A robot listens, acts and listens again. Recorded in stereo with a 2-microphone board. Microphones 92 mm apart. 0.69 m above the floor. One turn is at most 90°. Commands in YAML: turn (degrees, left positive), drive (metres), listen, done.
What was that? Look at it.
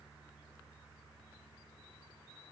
listen: true
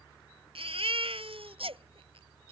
turn: -90
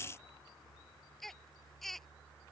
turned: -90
done: "Facing the baby crying."